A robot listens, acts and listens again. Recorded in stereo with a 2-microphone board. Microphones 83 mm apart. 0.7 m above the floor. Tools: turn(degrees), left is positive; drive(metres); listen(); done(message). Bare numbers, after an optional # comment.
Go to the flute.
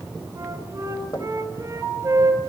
# The flute: about 40° right or 140° right.
turn(-40)
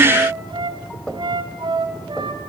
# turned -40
# So it is at 100° right.
turn(-100)
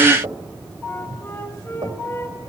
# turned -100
# The flute is now 30° left.
turn(30)
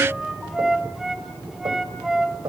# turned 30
drive(1.0)
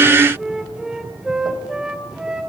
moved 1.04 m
# The flute is now 10° right.
turn(-10)
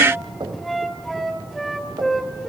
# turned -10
drive(1.0)
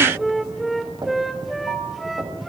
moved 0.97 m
drive(1.0)
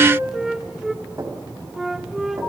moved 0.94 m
drive(1.0)
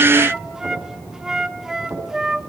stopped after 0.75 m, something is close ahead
# The flute is now 10° right.
turn(-10)
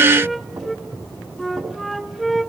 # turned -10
done("I am next to the flute.")